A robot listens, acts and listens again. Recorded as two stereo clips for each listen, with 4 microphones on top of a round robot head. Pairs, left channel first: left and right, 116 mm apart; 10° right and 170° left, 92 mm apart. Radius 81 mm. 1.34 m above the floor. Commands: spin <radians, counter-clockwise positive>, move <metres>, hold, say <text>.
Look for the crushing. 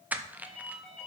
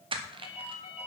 spin -2.88
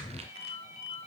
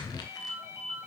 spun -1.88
spin -1.05
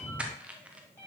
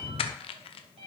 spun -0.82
spin -0.17
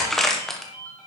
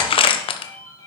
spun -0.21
say Found it: crushing, straight ahead.